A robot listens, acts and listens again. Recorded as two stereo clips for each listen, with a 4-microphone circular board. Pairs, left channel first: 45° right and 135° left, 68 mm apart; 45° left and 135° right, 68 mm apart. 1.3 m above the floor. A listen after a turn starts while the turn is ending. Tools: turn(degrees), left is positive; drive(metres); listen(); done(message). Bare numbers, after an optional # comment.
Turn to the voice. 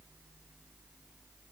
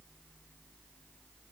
listen()
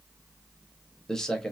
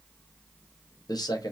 # The man speaking: 35° left.
turn(35)
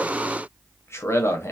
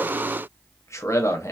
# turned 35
done("Facing the man speaking.")